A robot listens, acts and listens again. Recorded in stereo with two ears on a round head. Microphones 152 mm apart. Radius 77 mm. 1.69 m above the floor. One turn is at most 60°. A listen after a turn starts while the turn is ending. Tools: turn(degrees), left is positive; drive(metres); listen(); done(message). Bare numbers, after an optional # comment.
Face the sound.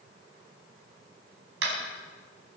# The tapping: about 75° right or 105° right.
turn(-60)
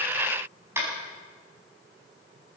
# So it is at 15° right.
turn(-15)
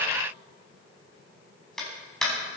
done("Facing the tapping.")